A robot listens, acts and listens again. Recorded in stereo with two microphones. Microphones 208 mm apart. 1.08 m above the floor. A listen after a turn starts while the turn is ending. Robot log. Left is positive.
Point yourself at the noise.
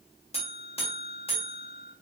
note: The buzzer: about 30° left or 150° left.
cmd yaw +30
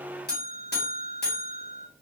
note: So it is at 115° left.
cmd yaw +115
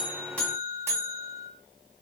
note: The buzzer is now 15° right.
cmd yaw -15
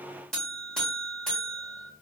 end: Facing the buzzer.